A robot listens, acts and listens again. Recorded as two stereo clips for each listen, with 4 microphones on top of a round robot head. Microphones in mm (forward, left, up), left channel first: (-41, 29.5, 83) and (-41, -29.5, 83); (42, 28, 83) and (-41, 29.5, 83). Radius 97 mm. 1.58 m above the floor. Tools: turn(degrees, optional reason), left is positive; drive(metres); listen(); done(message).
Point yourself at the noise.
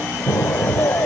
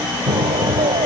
turn(degrees=145, reason="The explosion: 145° left.")
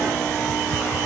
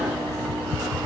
done("I heard an explosion from this way, but can't make it out now.")